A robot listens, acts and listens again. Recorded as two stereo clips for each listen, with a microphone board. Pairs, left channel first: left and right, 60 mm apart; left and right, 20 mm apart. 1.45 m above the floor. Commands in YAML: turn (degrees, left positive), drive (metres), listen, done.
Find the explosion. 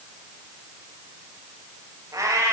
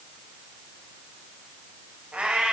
listen: true
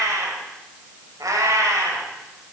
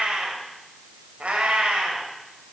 listen: true
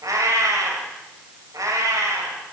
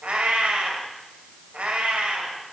done: "I can't make out an explosion to turn to."